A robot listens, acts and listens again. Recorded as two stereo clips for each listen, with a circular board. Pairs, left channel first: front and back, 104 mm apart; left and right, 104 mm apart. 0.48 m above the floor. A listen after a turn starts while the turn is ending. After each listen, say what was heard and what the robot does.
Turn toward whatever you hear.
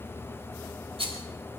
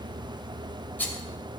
The rattle: 160° left. Turn 160° left.
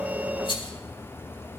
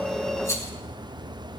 The rattle is now 30° left. Turn 30° left.
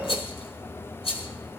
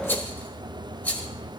The rattle is now 15° left. Turn 15° left.
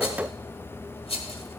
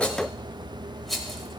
Found it: a rattle, straight ahead, 1 to 2 m away.